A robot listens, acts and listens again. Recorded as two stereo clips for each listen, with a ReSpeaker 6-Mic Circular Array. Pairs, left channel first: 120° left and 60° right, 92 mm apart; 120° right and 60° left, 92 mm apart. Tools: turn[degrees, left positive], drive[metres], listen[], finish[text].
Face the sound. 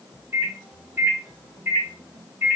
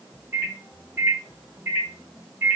Action: finish[Facing the microwave, 2 to 4 m away.]